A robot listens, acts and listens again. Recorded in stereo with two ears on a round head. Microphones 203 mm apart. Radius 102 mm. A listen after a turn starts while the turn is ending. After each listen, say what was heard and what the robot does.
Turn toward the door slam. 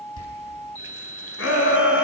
The door slam: about 70° left or 110° left. Turn 70° left.
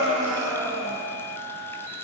Keep listening.
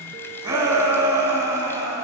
I heard a door slam, but can't make it out now. It was about straight ahead or 40° left.